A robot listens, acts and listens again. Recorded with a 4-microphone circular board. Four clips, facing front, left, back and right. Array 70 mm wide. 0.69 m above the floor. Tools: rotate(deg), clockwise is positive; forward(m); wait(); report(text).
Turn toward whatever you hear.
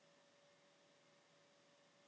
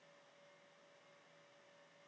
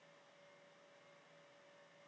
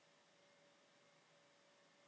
wait()
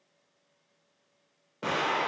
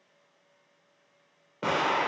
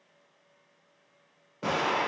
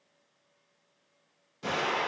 rotate(-80)
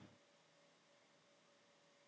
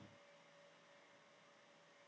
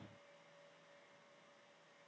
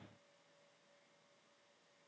report("I heard an explosion from this way, but can't make it out now.")